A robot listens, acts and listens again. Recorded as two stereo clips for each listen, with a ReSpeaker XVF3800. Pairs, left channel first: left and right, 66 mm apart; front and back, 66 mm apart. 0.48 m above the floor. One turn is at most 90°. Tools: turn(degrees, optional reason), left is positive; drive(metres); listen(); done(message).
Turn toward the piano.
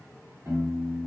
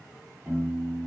turn(degrees=-90, reason="The piano: 120° right.")
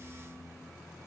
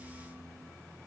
turn(degrees=-35, reason="The piano is now 35° right.")
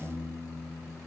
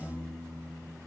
turn(degrees=-20, reason="The piano is now 20° right.")
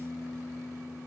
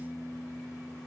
done("Facing the piano, 1 to 2 m away.")